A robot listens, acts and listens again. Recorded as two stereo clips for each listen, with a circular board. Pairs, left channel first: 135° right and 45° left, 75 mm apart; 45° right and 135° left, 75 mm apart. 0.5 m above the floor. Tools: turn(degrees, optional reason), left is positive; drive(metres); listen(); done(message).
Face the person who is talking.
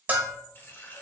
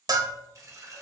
listen()
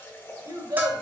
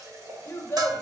turn(degrees=10, reason="The child speaking: 10° left.")
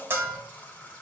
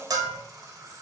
listen()
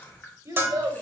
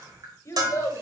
done("Facing the child speaking.")